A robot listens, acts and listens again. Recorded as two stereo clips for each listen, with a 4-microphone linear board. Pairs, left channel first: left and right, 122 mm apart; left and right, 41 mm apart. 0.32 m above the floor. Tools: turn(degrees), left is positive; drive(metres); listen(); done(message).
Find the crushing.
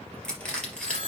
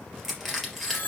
turn(degrees=30)
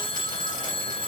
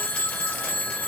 listen()
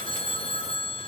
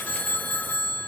listen()
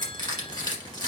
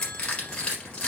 turn(degrees=145)
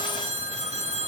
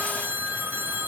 listen()
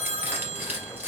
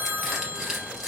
turn(degrees=-15)
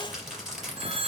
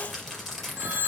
done("Found it: crushing, straight ahead.")